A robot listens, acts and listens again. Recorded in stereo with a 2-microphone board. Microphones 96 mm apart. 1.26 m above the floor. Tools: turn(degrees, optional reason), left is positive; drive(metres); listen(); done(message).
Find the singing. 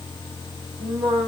turn(degrees=-55, reason="The singing: about 55° right or 125° right.")
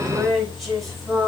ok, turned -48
done("Facing the singing.")